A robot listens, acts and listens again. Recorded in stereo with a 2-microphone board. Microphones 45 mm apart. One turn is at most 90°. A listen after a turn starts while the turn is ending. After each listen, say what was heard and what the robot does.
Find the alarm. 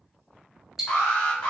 The alarm: about 20° left or 160° left. Turn 20° left.
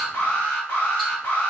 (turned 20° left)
So it is at 140° left. Turn 90° left.
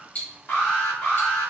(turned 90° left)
The alarm is now 45° left. Turn 45° left.
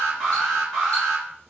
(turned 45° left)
The alarm is now 10° left. Turn 10° left.
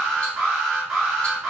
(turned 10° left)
Found it: an alarm, straight ahead.